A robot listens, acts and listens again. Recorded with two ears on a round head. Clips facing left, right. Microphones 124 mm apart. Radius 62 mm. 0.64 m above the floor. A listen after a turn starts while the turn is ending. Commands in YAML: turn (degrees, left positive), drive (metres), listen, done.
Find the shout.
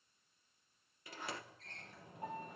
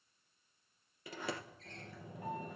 listen: true
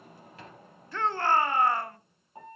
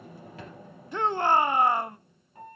turn: -15
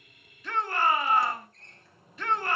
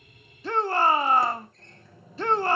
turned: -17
turn: -150
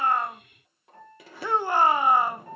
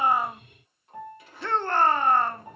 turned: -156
turn: 10
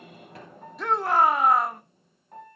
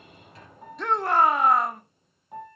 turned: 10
done: "Found it: a shout, straight ahead, under 1 m away."